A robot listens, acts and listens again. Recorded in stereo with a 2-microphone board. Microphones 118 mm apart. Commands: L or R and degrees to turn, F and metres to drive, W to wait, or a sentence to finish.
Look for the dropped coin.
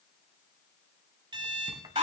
W
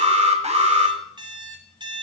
W
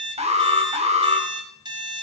I can't make out a dropped coin to turn to.